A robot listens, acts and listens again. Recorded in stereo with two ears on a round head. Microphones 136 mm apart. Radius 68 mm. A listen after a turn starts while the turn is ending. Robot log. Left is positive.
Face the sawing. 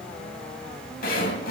note: The sawing: about 60° left or 120° left.
cmd yaw +60
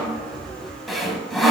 end: Facing the sawing, under 1 m away.